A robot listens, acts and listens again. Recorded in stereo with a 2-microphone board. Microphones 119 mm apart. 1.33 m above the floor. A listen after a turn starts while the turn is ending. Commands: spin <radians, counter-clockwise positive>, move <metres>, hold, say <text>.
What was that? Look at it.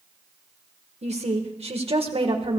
spin -0.87
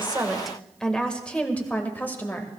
spin 0.35
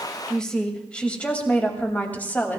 spin 0.26
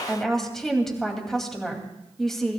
say Facing the woman speaking.